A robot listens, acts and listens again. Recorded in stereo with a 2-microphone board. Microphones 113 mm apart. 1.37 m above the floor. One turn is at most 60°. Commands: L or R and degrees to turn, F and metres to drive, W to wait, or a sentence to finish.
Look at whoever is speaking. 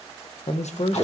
L60
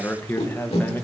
L20
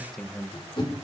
Found it: a man speaking, straight ahead.